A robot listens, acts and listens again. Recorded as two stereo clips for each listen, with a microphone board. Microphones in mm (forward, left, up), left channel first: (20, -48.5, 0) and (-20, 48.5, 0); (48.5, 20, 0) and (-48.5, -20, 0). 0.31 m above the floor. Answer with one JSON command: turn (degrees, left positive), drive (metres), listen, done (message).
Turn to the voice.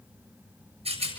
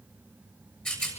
{"listen": true}
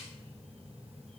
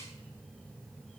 {"listen": true}
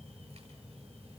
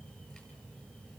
{"done": "I can't make out anyone speaking to turn to."}